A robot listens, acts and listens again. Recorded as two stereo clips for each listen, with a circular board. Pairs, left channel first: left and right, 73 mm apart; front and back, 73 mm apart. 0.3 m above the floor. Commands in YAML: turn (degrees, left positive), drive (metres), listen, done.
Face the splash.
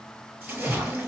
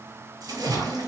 turn: -160
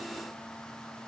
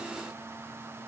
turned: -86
turn: -75
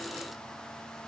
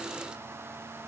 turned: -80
done: "I heard a splash from this way, but can't make it out now."